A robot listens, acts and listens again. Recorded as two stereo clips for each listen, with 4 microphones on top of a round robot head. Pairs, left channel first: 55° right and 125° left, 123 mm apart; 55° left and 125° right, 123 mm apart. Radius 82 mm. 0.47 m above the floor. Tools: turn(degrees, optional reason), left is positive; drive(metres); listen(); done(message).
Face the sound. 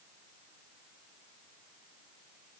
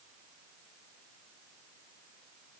listen()
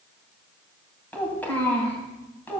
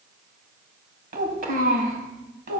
turn(degrees=-130, reason="The child speaking: 130° right.")
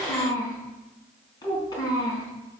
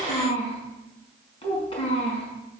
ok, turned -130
done("Found it: a child speaking, straight ahead, over 4 m away.")